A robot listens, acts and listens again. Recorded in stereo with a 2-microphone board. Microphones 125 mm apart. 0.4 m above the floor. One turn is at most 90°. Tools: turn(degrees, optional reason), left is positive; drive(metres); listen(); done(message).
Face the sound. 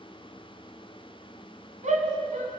turn(degrees=-70, reason="The shout: about 70° right or 110° right.")
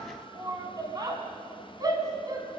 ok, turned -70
turn(degrees=-35, reason="So it is at 35° right.")
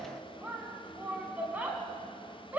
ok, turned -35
turn(degrees=-15, reason="The shout is now 15° right.")
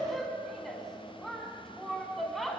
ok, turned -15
done("Facing the shout, 2 to 4 m away.")